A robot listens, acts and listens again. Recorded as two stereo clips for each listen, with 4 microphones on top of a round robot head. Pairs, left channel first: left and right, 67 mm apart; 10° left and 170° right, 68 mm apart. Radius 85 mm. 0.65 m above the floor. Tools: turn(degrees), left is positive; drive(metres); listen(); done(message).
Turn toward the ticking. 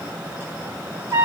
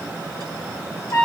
listen()
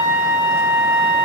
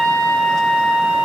listen()
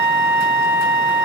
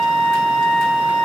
done("I can't make out ticking to turn to.")